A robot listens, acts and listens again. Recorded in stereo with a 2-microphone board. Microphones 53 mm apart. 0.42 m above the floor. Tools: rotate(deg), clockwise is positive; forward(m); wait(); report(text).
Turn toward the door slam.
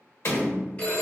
rotate(-50)
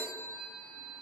wait()
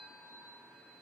report("I heard a door slam, but can't make it out now. It was about straight ahead or 80° left.")